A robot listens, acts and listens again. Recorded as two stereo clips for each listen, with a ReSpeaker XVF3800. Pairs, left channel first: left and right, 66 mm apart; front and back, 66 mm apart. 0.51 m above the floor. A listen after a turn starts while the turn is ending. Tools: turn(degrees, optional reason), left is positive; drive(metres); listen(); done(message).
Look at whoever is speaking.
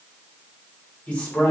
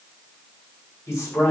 turn(degrees=30, reason="The man speaking: 30° left.")
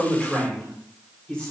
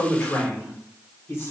turn(degrees=25, reason="The man speaking is now 25° left.")
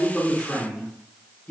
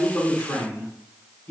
turn(degrees=35, reason="The man speaking is now 35° left.")
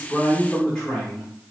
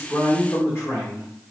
turn(degrees=25, reason="The man speaking is now 25° left.")
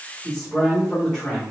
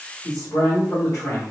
turn(degrees=15, reason="The man speaking is now 15° left.")
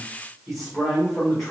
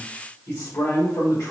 done("Found it: a man speaking, straight ahead, 1 to 2 m away.")